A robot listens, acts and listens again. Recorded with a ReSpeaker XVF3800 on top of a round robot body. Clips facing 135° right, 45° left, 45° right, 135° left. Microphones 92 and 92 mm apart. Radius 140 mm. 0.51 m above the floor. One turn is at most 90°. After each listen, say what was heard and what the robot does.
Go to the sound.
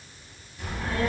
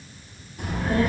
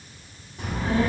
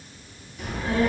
The child speaking: 10° left. Turn 10° left.
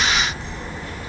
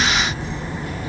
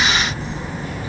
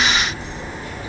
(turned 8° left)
Drive 1.0 m forward.
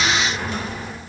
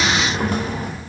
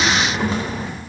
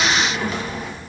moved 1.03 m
The child speaking is now 10° left. Turn 10° left.
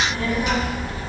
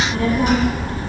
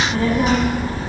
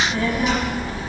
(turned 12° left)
Drive 1.0 m forward.
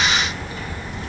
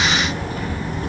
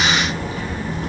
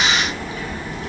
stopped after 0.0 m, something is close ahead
I am next to the child speaking.